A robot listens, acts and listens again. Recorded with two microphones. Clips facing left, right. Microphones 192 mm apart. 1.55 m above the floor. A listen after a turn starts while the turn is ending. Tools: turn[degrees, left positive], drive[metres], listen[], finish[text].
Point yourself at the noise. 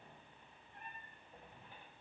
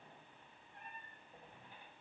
Action: listen[]
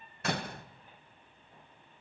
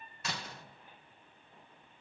Thought: The door slam: about 55° left or 125° left.
Action: turn[55]
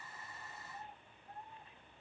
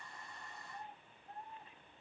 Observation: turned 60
Action: listen[]
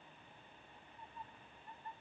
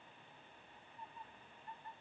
Action: finish[I heard a door slam, but can't make it out now. It was about 5° right or 65° left.]